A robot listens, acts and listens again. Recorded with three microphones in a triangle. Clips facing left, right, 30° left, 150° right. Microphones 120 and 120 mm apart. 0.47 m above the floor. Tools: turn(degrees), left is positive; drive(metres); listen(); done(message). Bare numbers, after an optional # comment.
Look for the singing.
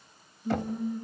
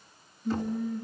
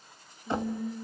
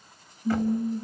# The singing: 170° left.
turn(170)
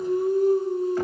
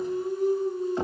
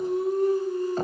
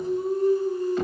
# The singing is now 65° left.
turn(65)
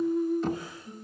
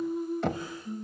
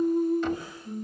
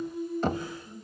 done("Facing the singing.")